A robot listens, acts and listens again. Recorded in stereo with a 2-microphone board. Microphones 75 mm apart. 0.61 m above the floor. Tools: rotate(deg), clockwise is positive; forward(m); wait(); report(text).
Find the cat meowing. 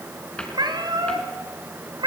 rotate(90)
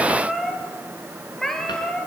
rotate(-10)
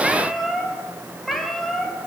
report("Found it: a cat meowing, straight ahead, 2 to 4 m away.")